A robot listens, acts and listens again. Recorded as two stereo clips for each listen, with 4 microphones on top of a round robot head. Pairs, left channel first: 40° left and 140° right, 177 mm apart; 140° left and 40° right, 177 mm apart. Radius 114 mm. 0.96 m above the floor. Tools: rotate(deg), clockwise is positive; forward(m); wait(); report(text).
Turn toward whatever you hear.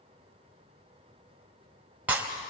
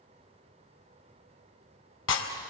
rotate(-140)
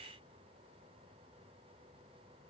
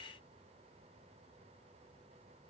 report("I heard breaking glass from this way, but can't make it out now.")